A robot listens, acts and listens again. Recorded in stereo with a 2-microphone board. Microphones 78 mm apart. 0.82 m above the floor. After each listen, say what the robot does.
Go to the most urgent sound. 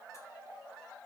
Keep listening.
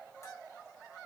Keep listening.
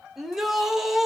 Turn 30° right.
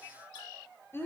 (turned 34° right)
Turn 30° left.
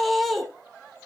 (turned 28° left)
Drive 1.0 m forward.
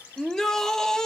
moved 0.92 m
Turn 10° left.
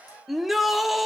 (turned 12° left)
Drive 1.0 m forward.
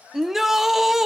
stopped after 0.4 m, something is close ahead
Arrived at the shout, straight ahead.